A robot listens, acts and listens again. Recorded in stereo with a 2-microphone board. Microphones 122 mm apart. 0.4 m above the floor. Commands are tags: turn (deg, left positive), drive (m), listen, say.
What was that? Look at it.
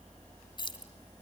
<turn deg="40"/>
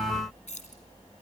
<turn deg="100"/>
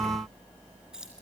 <say>Facing the keys jangling, 2 to 4 m away.</say>